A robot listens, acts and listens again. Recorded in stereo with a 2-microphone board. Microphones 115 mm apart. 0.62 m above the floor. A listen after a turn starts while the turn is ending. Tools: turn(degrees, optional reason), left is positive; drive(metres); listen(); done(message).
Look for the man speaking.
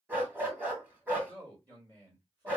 turn(degrees=-35, reason="The man speaking: about 35° right or 145° right.")
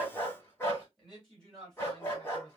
done("Facing the man speaking, 2 to 4 m away.")